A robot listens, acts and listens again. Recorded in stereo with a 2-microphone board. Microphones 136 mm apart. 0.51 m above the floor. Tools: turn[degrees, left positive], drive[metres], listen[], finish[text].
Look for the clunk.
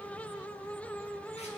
Action: listen[]
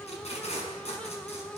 Action: listen[]
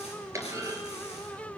Thought: The clunk: about 20° right or 160° right.
Action: turn[-20]
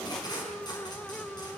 Action: listen[]
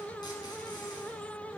Action: finish[I heard a clunk, but can't make it out now. It was about straight ahead or 140° right.]